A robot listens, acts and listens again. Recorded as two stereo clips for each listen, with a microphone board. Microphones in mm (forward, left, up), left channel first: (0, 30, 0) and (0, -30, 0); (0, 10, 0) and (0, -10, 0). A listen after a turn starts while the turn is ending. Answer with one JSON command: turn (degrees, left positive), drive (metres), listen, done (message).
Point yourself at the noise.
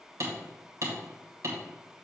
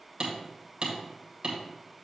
{"turn": -55}
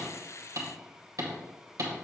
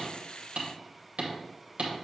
{"turn": -65}
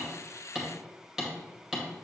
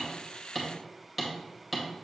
{"done": "Facing the hammering."}